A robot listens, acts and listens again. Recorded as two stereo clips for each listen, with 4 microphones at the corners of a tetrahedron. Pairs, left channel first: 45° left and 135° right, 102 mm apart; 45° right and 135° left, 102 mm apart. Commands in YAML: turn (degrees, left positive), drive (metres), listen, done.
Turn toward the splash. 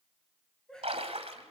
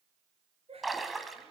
turn: -135
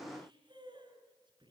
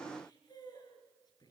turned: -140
done: "I heard a splash from this way, but can't make it out now."